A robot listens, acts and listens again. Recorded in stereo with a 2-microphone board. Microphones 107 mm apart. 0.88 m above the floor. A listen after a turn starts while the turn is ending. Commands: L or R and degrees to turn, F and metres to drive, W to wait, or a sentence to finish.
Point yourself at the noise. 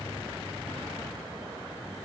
W
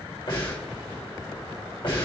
L50
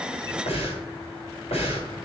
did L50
L80
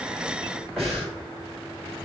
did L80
Found it: breathing, straight ahead, 2 to 4 m away.